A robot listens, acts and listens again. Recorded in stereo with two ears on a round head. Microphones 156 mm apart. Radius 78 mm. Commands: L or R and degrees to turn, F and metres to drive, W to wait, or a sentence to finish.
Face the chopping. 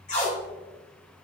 W
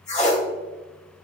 W
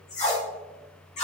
I can't make out chopping, only tape being pulled.